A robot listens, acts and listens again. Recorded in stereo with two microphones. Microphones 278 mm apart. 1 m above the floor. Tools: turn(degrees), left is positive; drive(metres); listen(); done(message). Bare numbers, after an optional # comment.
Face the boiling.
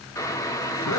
turn(30)
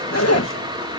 # So it is at 15° right.
turn(-15)
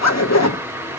# The boiling is now 10° right.
turn(-10)
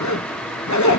done("Found it: boiling, straight ahead.")